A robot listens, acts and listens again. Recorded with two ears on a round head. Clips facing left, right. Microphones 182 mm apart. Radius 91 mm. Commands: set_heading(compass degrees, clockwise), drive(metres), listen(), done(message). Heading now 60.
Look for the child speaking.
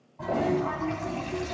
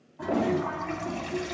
set_heading(5)
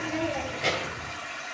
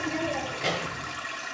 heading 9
done("Facing the child speaking.")